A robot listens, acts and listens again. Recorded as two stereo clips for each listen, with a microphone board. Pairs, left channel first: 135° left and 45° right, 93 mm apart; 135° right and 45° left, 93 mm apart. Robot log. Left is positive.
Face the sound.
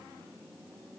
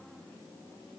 cmd idle
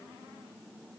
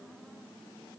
cmd idle
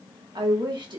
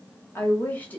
note: The woman speaking: 65° right.
cmd yaw -65
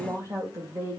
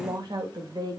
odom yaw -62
note: The woman speaking is now 15° left.
cmd yaw +15
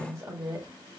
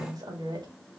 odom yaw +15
note: The woman speaking is now 10° left.
cmd yaw +10
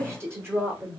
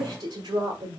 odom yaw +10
note: The woman speaking is now 20° left.
cmd yaw +20
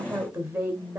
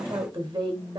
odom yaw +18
end: Facing the woman speaking.